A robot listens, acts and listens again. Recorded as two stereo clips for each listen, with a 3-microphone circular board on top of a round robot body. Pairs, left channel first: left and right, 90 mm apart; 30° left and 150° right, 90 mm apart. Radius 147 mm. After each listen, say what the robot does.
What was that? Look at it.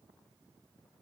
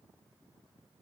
Keep listening.
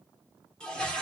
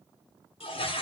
Turn 10° left.
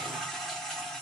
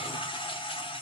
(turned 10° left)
Found it: a toilet flushing, straight ahead.